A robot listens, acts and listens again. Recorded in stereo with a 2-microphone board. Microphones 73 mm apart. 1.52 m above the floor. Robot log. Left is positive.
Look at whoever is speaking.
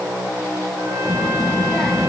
cmd yaw +30
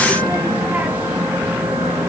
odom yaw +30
note: So it is at 25° right.
cmd yaw -25
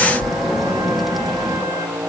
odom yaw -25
end: Found it: a child speaking, straight ahead.